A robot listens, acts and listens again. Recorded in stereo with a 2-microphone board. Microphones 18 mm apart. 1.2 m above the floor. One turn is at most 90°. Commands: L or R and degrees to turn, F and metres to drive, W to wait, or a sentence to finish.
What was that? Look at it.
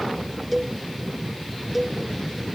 R30
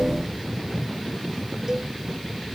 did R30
W
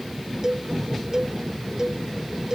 R90
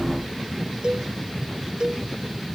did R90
R55
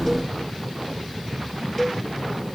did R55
L20
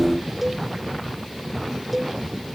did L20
Facing the cowbell.